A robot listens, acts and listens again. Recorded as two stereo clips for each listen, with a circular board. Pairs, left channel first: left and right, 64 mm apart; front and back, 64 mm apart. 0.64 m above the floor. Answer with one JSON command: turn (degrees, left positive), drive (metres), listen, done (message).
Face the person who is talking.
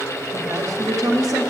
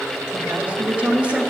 {"turn": -110}
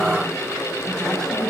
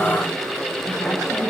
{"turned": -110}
{"done": "Found it: a woman speaking, straight ahead, 2 to 4 m away."}